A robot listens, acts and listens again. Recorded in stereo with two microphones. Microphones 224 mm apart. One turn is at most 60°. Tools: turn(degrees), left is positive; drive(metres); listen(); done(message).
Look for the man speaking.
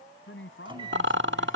turn(degrees=60)
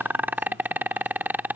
listen()
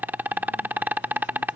listen()
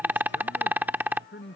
turn(degrees=55)
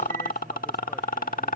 listen()
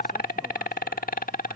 listen()
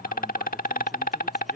done("I heard a man speaking from this way, but can't make it out now.")